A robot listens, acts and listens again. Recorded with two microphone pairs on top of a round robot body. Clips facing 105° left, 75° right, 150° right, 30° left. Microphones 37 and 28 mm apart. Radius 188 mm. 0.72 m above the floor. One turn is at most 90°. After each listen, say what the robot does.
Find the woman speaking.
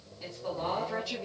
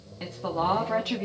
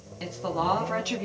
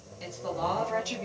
Turn 90° right.
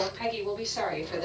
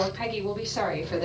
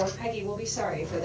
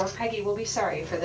Found it: a woman speaking, straight ahead.